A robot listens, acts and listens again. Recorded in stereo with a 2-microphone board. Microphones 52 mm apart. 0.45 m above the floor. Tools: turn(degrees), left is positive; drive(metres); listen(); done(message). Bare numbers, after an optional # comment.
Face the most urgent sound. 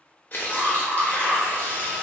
turn(30)
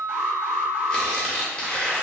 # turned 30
# So it is at 35° right.
turn(-35)
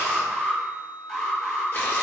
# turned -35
done("Facing the alarm, 1 to 2 m away.")